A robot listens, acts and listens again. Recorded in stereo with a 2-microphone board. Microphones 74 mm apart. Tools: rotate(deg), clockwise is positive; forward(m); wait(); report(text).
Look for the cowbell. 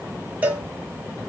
rotate(20)
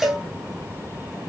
report("Facing the cowbell, under 1 m away.")